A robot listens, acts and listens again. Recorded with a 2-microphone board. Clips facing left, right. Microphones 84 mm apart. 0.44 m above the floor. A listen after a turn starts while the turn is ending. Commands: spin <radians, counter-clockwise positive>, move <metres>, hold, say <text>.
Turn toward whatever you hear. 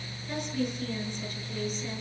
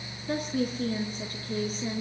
spin -0.79
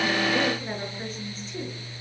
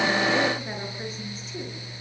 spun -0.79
say Facing the woman speaking, over 4 m away.